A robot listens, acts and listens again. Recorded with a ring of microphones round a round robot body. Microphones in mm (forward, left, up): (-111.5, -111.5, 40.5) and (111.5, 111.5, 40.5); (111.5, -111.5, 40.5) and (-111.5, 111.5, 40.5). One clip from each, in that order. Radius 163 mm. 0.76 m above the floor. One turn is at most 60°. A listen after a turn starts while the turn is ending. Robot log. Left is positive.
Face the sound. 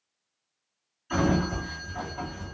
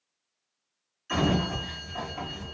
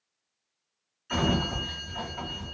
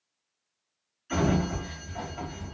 note: The sliding door: 40° left.
cmd yaw +40
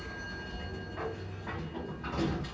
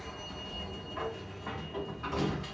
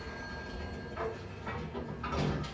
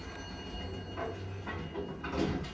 note: The sliding door is now 25° left.
cmd yaw +25
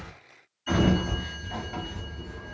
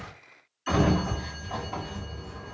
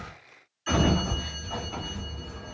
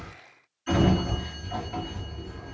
end: Facing the sliding door.